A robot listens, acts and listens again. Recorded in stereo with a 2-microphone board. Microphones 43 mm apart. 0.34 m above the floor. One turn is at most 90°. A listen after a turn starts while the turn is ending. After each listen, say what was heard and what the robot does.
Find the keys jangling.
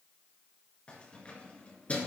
The keys jangling: about 30° left or 150° left. Turn 30° left.
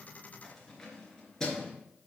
So it is at 15° left. Turn 15° left.
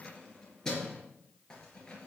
The keys jangling is now 20° left. Turn 20° left.
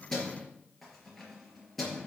Found it: keys jangling, straight ahead, over 4 m away.